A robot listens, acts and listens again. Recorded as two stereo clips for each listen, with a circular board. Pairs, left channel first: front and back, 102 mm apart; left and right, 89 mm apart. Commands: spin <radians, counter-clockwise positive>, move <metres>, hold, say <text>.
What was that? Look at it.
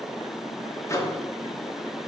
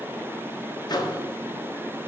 spin 1.05
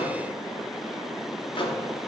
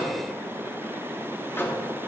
spin 0.52
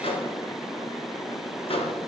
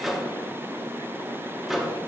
say Found it: a microwave, straight ahead, 1 to 2 m away.